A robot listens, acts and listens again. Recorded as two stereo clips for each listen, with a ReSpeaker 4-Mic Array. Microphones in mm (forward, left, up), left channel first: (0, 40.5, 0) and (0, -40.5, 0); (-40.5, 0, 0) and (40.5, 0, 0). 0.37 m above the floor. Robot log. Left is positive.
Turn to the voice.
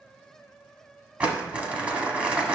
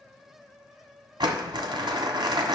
cmd idle
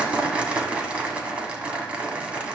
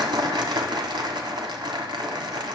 cmd idle
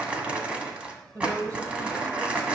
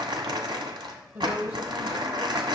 note: The woman speaking: 55° right.
cmd yaw -55
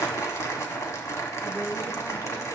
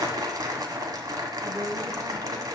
cmd idle
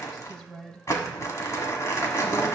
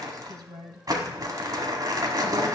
end: Facing the woman speaking.